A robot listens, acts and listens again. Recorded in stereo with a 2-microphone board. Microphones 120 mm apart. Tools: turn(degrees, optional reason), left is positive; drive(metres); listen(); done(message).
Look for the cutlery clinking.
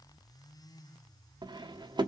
turn(degrees=-40, reason="The cutlery clinking: about 40° right or 140° right.")
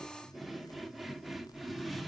done("Facing the cutlery clinking, under 1 m away.")